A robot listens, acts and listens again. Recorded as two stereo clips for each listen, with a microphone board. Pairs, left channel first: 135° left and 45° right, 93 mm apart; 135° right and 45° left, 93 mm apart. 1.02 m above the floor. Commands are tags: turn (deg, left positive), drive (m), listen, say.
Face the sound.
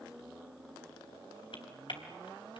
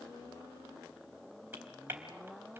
<turn deg="110"/>
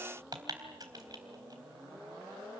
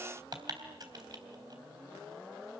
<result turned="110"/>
<say>Facing the typing on a keyboard.</say>